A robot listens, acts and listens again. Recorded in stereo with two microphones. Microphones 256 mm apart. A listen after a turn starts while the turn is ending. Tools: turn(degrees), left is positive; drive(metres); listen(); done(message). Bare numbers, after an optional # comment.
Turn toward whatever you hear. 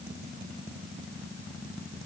listen()
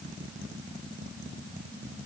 listen()
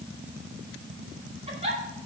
# The giggle: about 25° right or 155° right.
turn(-25)
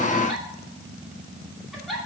done("Facing the giggle, 2 to 4 m away.")